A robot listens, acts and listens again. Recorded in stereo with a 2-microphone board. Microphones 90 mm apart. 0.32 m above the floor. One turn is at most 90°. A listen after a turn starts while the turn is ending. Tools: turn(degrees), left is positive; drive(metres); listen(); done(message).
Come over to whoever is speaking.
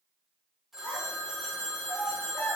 turn(degrees=25)
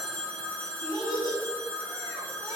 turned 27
turn(degrees=90)
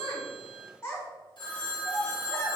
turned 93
turn(degrees=30)
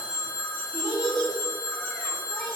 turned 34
drive(metres=1.0)
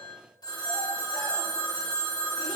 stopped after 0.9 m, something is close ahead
listen()
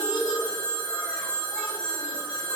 turn(degrees=-10)
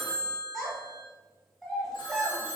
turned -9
done("Arrived at the child speaking, straight ahead.")